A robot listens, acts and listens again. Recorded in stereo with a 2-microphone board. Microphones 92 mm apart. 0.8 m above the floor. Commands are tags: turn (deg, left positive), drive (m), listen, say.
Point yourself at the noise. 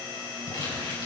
<turn deg="65"/>
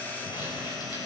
<listen/>
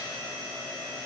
<listen/>
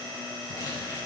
<say>I heard crumpling, but can't make it out now. It was about straight ahead or 50° left.</say>